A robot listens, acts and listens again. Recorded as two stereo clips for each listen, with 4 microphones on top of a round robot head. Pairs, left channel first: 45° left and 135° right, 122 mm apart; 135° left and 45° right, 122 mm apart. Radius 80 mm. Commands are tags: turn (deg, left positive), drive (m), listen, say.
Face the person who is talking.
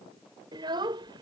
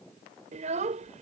<turn deg="-75"/>
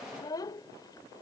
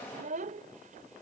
<turn deg="-15"/>
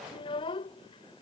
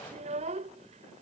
<say>Found it: a child speaking, straight ahead.</say>